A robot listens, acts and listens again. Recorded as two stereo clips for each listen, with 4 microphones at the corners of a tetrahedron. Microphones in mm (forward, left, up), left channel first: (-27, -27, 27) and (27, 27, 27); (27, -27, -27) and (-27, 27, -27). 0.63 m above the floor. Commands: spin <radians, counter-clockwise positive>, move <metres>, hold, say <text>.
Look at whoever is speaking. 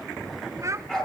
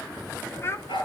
say Facing the child speaking, 1 to 2 m away.